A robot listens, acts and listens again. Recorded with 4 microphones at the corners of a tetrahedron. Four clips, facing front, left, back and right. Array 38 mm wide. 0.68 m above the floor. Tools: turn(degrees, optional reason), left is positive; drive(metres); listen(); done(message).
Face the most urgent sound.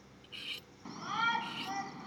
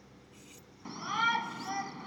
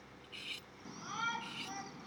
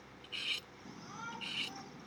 turn(degrees=70, reason="The shout: 70° left.")
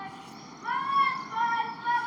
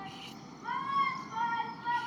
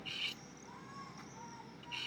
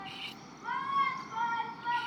done("Facing the shout.")